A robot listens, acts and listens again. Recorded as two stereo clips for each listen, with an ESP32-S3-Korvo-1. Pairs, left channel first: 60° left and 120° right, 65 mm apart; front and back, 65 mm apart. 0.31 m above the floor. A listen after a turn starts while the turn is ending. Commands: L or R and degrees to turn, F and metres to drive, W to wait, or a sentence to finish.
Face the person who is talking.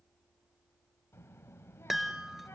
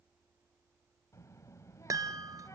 L20
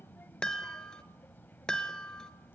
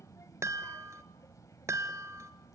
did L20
Facing the child speaking.